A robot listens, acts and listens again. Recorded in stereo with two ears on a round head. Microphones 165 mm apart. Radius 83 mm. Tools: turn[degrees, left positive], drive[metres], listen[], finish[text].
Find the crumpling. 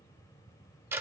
Action: listen[]
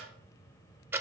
Action: listen[]
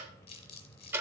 Thought: The crumpling: about 35° left or 145° left.
Action: turn[35]
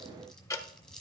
Action: finish[Found it: crumpling, straight ahead.]